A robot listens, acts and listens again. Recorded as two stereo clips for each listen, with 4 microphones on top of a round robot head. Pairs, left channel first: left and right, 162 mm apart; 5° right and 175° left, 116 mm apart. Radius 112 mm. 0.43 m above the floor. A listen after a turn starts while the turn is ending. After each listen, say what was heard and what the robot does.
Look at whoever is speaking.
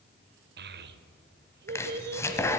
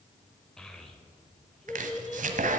The child speaking: 95° right. Turn 95° right.
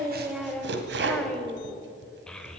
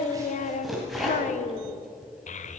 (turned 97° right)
Found it: a child speaking, straight ahead, 1 to 2 m away.